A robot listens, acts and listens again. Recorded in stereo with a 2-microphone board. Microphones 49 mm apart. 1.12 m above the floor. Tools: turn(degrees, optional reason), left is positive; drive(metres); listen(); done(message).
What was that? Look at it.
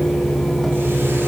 listen()
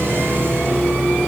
listen()
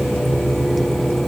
done("I can't make out anything to turn to.")